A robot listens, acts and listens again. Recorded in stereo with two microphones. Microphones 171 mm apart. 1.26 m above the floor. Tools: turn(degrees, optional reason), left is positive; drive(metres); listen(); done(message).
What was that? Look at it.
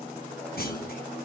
turn(degrees=70, reason="The clunk: about 70° left or 110° left.")
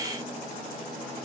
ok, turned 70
listen()
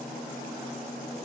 done("I heard a clunk, but can't make it out now. It was about straight ahead or 40° left.")